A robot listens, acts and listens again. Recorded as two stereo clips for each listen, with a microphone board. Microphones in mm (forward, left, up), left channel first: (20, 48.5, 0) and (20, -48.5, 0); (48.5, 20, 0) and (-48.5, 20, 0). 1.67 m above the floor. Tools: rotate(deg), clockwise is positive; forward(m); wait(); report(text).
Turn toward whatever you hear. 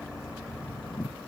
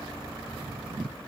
wait()
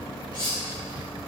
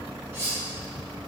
rotate(-115)
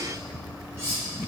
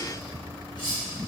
rotate(30)
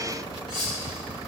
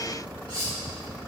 rotate(10)
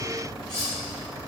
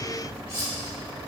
report("Found it: cutlery clinking, straight ahead, 2 to 4 m away.")